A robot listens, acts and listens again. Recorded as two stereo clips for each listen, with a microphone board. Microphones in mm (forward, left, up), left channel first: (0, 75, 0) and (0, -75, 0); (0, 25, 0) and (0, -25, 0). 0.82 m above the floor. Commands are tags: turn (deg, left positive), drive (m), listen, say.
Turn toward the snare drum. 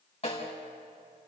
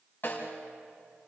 <turn deg="45"/>
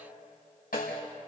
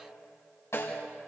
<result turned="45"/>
<turn deg="95"/>
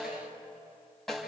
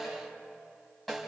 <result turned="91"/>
<say>Facing the snare drum.</say>